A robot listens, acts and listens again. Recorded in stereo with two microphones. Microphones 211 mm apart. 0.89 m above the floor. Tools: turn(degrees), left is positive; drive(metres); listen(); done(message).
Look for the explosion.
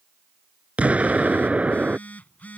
turn(degrees=-30)
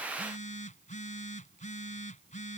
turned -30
listen()
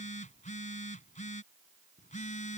done("I heard an explosion, but can't make it out now. It was about 25° left or 145° right.")